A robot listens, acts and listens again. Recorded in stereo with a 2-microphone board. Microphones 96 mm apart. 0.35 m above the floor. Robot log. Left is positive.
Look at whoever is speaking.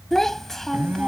cmd yaw +30
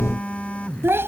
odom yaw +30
note: So it is at 30° right.
cmd yaw -30
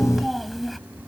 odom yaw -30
end: Found it: a child speaking, straight ahead.